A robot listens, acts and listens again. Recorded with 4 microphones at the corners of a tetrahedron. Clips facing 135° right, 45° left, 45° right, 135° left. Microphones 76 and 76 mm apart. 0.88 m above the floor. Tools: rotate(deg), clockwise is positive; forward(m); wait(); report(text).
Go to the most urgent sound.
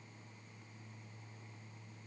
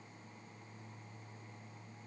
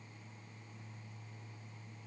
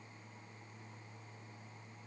wait()
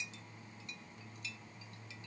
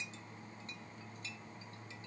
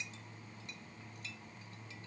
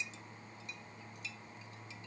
wait()
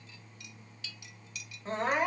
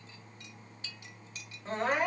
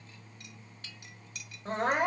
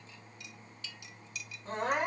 rotate(50)
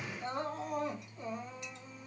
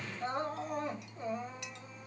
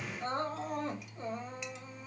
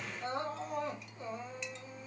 forward(1.0)
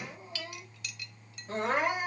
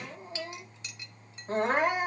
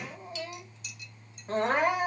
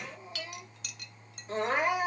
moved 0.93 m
forward(1.0)
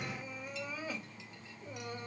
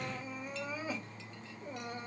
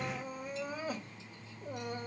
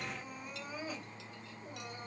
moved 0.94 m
rotate(20)
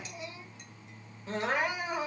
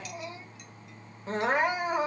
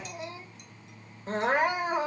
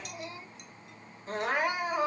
forward(1.0)
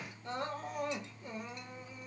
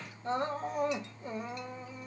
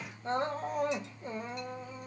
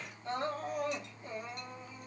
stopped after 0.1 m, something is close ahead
report("I am next to the crying.")